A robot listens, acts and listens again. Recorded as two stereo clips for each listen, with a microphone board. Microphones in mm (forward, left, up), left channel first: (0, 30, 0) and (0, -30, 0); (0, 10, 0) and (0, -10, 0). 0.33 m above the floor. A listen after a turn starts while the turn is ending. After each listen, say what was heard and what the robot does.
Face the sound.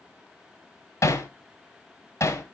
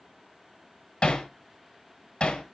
The hammering: about 50° left or 130° left. Turn 50° left.
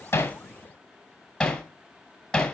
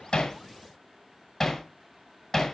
So it is at 10° left. Turn 10° left.
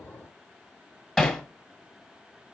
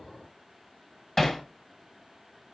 Facing the hammering.